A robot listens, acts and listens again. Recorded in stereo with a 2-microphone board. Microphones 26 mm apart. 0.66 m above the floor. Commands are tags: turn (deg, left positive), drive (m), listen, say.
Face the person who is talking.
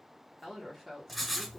<turn deg="30"/>
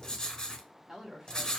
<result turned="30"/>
<turn deg="-15"/>
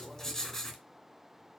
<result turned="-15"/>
<listen/>
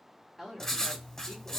<say>Found it: a woman speaking, straight ahead, 1 to 2 m away.</say>